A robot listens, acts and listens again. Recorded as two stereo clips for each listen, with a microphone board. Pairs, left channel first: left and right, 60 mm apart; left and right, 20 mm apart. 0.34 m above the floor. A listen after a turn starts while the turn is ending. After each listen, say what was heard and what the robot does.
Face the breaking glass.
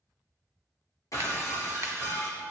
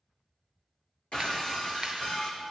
The breaking glass: about 70° left or 110° left. Turn 70° left.
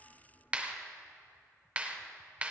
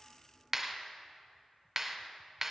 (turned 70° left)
Keep listening.
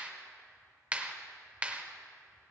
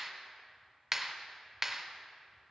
I heard breaking glass, but can't make it out now. It was about straight ahead or 40° left.